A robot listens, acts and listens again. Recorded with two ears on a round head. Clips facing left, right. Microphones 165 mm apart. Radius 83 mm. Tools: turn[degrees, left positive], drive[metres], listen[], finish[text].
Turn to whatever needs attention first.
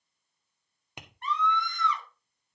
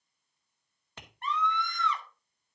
Thought: The scream: about 45° right or 135° right.
Action: turn[-45]
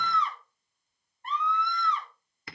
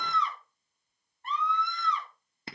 Thought: So it is at 90° right.
Action: turn[-90]
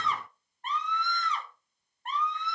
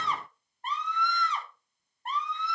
Thought: The scream is now 30° right.
Action: turn[-30]
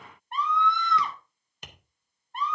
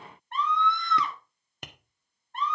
Thought: The scream is now 10° left.
Action: turn[10]
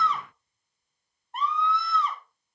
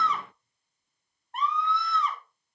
Action: finish[Facing the scream.]